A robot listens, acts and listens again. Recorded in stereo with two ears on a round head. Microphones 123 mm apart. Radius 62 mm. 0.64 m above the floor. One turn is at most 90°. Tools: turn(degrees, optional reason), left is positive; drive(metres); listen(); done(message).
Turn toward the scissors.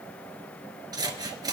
turn(degrees=-30, reason="The scissors: about 30° right or 150° right.")
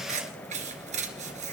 turn(degrees=-90, reason="So it is at 120° right.")
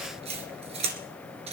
turn(degrees=-45, reason="The scissors is now 45° right.")
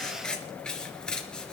done("Found it: scissors, straight ahead.")